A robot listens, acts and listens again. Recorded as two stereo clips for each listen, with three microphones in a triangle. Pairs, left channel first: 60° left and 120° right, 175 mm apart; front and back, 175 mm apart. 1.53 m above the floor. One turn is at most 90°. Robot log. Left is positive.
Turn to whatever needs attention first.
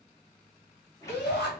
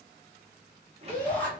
note: The shout: 80° left.
cmd yaw +80
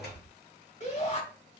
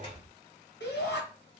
note: The shout is now 10° left.
cmd yaw +10
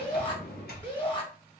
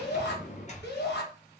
end: Facing the shout, 1 to 2 m away.